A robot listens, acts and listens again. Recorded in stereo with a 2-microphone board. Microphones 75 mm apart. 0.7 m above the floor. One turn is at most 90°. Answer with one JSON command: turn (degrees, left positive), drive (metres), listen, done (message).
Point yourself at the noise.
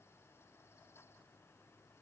{"listen": true}
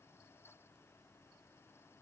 {"listen": true}
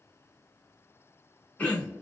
{"turn": 20}
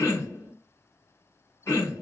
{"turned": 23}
{"turn": 90}
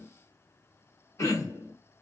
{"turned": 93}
{"turn": 45}
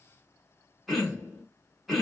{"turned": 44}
{"done": "Found it: throat clearing, straight ahead."}